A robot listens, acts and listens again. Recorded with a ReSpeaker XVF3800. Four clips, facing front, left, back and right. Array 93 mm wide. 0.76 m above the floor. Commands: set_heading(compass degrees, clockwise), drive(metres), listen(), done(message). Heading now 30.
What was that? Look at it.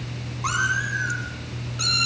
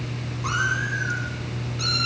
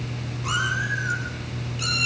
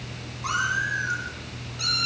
done("Found it: a cat meowing, straight ahead.")